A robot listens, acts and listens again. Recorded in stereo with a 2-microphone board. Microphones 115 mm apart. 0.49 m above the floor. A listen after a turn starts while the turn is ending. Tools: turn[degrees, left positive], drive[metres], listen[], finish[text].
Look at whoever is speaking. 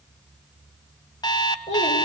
Action: turn[90]
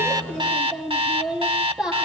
Action: finish[Facing the child speaking.]